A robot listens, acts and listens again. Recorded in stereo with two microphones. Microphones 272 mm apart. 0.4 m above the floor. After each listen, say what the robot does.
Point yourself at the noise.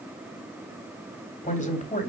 Turn 30° left.
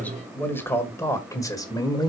Turn 15° left.
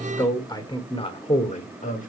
Turn 30° left.
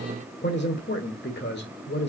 Turn 40° left.
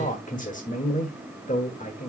Turn 30° left.
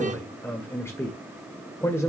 Turn 10° left.
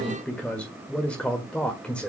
Found it: a man speaking, straight ahead, 1 to 2 m away.